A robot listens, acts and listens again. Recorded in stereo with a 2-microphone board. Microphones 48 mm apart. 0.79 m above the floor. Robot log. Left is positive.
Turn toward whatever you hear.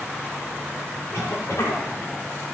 note: The cough: about 70° left or 110° left.
cmd yaw +70
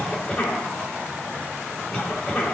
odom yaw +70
note: So it is at 25° left.
cmd yaw +25
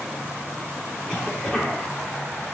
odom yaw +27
end: Facing the cough, 2 to 4 m away.